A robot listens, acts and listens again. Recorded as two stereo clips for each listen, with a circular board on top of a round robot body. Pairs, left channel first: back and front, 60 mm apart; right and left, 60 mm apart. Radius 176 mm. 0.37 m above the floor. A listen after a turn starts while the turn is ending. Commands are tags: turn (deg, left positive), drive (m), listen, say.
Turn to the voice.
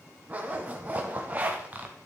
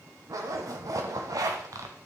<listen/>
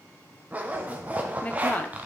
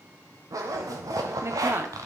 <turn deg="115"/>
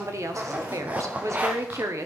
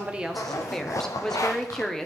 <turn deg="-10"/>
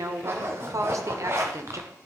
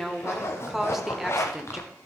<say>Found it: a woman speaking, straight ahead, 1 to 2 m away.</say>